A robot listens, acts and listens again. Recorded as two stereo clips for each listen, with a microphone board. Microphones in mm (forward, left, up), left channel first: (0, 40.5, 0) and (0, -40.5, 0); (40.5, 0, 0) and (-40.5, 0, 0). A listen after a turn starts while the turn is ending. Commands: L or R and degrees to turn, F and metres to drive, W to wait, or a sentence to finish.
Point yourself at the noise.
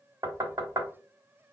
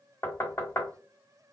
R55
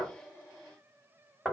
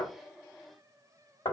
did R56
Found it: knocking, straight ahead, 1 to 2 m away.